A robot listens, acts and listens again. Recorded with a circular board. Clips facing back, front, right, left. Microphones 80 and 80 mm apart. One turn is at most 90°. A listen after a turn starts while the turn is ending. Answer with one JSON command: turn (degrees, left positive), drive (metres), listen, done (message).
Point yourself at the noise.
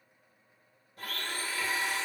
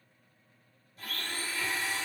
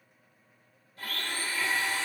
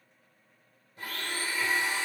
{"turn": 90}
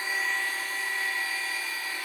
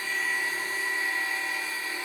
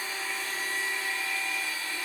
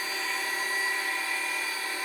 {"turn": 60}
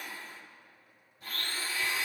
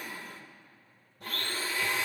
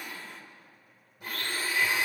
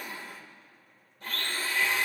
{"turn": -10}
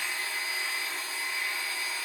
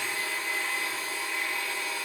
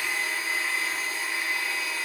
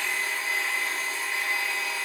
{"done": "Facing the blender, 1 to 2 m away."}